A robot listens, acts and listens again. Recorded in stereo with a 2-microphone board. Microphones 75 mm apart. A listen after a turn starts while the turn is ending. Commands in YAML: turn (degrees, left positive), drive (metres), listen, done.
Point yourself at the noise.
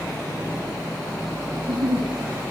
turn: -90
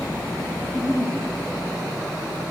done: "Found it: a giggle, straight ahead, over 4 m away."